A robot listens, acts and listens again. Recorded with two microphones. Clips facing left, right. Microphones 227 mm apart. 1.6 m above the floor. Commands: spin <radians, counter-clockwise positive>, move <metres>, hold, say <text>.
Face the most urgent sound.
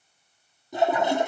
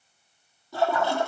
hold
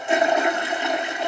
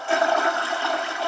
hold
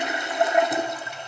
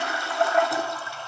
say I can't make out anything urgent, only a toilet flushing.